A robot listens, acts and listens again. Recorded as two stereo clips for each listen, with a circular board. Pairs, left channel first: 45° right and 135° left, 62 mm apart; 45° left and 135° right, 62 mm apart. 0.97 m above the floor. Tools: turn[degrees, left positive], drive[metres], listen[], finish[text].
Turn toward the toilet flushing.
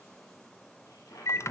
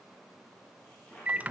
Thought: The toilet flushing: 20° right.
Action: turn[-20]
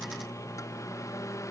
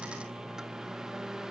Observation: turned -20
Action: listen[]
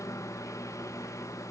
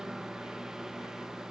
Action: listen[]
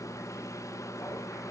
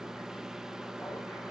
Action: finish[Facing where the toilet flushing came from. I can't hear it now.]